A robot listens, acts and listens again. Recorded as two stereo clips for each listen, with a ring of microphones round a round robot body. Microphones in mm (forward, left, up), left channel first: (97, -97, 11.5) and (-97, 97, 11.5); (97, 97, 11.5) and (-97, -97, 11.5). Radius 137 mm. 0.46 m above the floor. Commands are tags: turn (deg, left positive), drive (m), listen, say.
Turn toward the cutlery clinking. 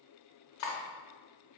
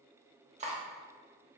<turn deg="-70"/>
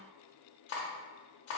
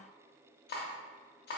<turn deg="-10"/>
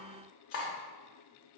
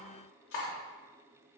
<say>Found it: cutlery clinking, straight ahead.</say>